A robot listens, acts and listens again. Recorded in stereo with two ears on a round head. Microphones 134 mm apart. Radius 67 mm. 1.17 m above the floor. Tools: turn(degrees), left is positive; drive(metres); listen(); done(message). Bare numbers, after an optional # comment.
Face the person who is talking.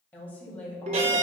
turn(30)
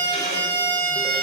listen()
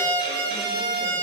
listen()
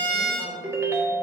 done("I heard a woman speaking, but can't make it out now. It was about 20° right or 140° left.")